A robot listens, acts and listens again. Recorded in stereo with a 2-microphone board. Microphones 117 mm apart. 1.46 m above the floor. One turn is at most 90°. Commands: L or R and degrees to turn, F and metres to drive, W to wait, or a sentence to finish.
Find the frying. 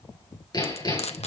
L65
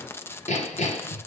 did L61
L25
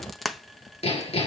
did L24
Found it: frying, straight ahead, 1 to 2 m away.